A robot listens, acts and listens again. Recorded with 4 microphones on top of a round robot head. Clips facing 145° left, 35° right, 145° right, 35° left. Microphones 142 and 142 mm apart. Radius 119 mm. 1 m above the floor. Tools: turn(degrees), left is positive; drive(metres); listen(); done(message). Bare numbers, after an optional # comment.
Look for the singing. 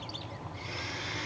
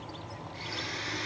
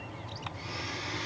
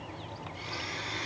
listen()
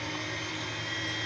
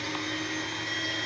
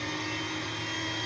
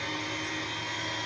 listen()
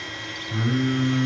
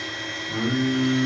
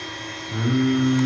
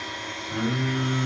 # The singing: 65° right.
turn(-65)
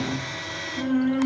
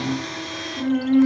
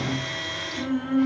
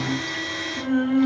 # The singing is now 25° left.
turn(25)
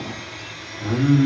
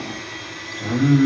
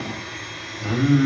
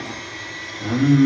done("Found it: singing, straight ahead, 2 to 4 m away.")